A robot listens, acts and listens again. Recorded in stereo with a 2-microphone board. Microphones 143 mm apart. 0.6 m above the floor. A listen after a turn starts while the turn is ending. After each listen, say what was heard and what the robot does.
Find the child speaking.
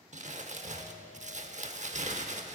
Keep listening.
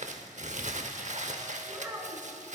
The child speaking: about 15° right or 165° right. Turn 15° right.
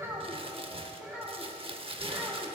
Turn 30° right.
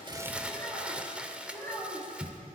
So it is at 20° left. Turn 20° left.
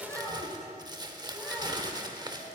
Facing the child speaking.